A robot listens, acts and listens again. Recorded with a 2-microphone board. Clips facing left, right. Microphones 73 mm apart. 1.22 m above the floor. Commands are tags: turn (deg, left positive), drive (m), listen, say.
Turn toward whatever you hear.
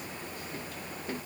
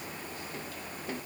<listen/>
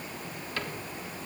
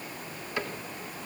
<turn deg="-15"/>
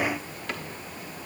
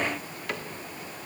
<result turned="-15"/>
<say>Found it: a cupboard door, straight ahead.</say>